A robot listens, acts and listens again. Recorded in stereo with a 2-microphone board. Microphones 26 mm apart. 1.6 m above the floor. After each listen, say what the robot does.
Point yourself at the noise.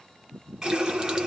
Turn 25° right.
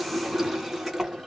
Found it: a running tap, straight ahead, 1 to 2 m away.